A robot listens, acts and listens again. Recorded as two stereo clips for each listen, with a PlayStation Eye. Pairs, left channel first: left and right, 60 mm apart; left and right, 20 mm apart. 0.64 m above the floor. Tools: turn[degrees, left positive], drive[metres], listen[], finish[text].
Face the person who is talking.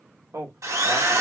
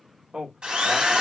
Thought: The man speaking: about 50° right or 130° right.
Action: turn[-50]
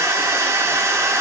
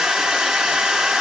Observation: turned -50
Action: listen[]
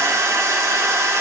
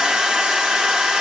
Action: listen[]
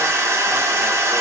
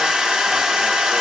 Action: finish[I heard a man speaking, but can't make it out now. It was about straight ahead or 80° right.]